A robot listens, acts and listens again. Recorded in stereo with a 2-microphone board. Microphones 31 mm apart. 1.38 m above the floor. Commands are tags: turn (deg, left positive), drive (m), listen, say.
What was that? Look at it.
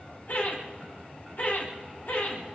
<turn deg="65"/>
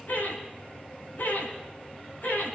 <turn deg="60"/>
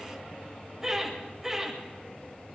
<turn deg="-10"/>
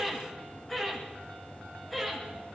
<say>Found it: laughter, straight ahead, over 4 m away.</say>